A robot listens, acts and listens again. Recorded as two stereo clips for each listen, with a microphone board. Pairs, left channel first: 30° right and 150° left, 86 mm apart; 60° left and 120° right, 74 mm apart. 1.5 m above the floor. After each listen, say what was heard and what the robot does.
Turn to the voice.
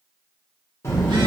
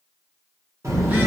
The child speaking: 85° right. Turn 85° right.
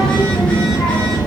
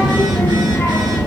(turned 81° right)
Found it: a child speaking, straight ahead, under 1 m away.